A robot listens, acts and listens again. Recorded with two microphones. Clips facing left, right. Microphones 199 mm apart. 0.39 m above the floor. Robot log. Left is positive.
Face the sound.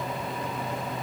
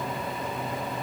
cmd idle
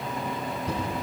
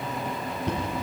cmd yaw -90
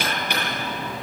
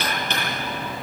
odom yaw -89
note: So it is at 10° left.
cmd yaw +10
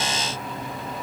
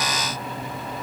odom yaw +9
cmd idle
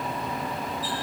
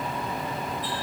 cmd idle
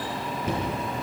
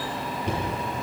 end: Found it: knocking, straight ahead, over 4 m away.